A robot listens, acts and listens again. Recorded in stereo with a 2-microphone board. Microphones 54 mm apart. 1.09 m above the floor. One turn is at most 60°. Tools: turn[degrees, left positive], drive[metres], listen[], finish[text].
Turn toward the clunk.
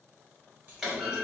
Action: turn[-30]
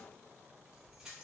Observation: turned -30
Action: listen[]
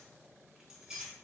Action: finish[I heard a clunk, but can't make it out now. It was about 25° left or 145° right.]